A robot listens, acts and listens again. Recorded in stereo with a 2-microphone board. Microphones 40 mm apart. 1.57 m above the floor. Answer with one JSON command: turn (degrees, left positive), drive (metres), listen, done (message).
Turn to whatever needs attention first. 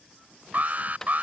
{"turn": -40}
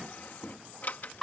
{"done": "Facing the alarm."}